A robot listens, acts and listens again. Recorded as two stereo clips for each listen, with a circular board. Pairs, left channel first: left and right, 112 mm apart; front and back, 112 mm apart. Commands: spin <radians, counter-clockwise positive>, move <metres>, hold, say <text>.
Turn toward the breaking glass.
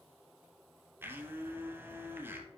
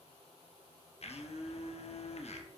hold
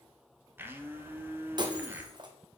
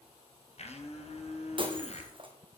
spin -2.44
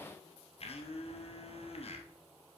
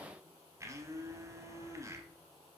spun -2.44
say I heard breaking glass from this way, but can't make it out now.